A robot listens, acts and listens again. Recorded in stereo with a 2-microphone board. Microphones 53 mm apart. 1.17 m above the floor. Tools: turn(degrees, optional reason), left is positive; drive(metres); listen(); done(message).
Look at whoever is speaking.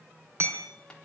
listen()
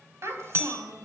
turn(degrees=-60, reason="The child speaking: about 60° right or 120° right.")
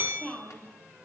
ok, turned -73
turn(degrees=15, reason="So it is at 15° left.")
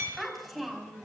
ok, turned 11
done("Facing the child speaking, over 4 m away.")